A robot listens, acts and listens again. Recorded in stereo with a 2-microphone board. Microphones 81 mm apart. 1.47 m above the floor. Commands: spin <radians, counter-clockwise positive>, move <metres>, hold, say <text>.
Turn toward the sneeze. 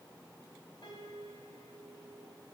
hold
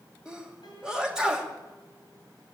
spin -0.52
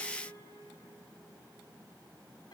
hold
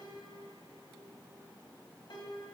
say I heard a sneeze, but can't make it out now. It was about 20° left or 140° right.